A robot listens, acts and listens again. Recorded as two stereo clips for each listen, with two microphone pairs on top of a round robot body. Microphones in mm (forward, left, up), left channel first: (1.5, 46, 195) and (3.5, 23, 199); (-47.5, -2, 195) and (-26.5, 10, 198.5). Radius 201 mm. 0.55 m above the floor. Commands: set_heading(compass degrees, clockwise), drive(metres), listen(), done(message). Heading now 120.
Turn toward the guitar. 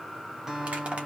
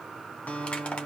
set_heading(270)
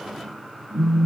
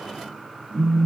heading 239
set_heading(269)
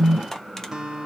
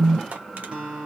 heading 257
set_heading(272)
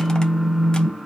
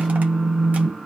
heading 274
listen()
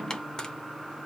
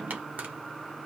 listen()
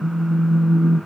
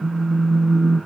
done("Facing where the guitar came from. I can't hear it now.")